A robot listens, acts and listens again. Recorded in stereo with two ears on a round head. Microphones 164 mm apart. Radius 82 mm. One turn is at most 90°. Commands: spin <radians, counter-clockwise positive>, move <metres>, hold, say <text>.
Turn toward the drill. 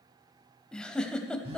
hold
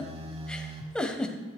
hold
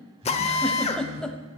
spin 0.61
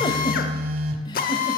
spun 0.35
spin 1.57
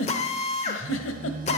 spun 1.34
spin 0.70
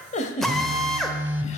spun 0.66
say Facing the drill.